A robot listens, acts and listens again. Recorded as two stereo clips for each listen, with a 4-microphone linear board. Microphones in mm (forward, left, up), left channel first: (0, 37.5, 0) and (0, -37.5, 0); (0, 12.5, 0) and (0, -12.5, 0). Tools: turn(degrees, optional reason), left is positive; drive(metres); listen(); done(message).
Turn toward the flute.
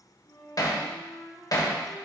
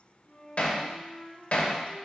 turn(degrees=65, reason="The flute: about 65° left or 115° left.")
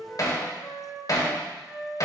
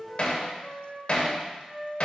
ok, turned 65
done("Facing the flute.")